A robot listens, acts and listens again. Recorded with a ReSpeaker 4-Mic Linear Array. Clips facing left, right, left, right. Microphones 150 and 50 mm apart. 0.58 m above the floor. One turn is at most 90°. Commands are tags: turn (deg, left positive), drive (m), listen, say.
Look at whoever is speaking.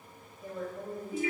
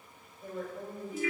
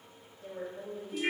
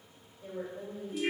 <turn deg="30"/>
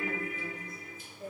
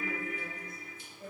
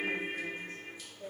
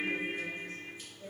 <turn deg="90"/>
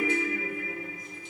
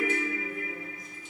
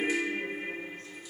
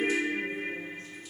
<turn deg="55"/>
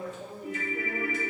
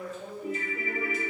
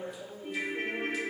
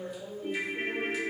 <say>Found it: a woman speaking, straight ahead.</say>